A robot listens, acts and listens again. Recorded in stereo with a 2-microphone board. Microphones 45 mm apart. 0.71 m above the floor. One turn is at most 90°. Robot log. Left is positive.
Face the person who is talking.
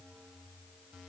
cmd idle
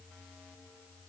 cmd idle
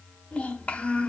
note: The child speaking: about 30° left or 150° left.
cmd yaw +30
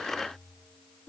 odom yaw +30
note: So it is at 120° left.
cmd yaw +90
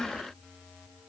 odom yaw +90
note: The child speaking is now 30° left.
cmd yaw +30
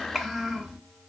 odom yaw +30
end: Found it: a child speaking, straight ahead.